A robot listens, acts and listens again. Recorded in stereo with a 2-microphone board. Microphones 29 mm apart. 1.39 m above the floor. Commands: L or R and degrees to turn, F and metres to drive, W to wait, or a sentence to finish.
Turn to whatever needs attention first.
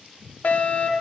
L65
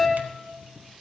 L20
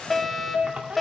Facing the fire alarm, 1 to 2 m away.